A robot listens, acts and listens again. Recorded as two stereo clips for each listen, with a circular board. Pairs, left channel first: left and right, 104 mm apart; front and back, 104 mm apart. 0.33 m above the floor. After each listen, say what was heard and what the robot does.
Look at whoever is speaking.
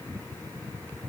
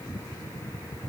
Keep listening.
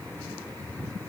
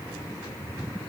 Keep listening.
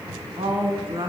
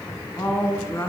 The woman speaking: 60° right. Turn 60° right.
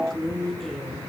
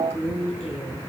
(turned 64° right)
Facing the woman speaking.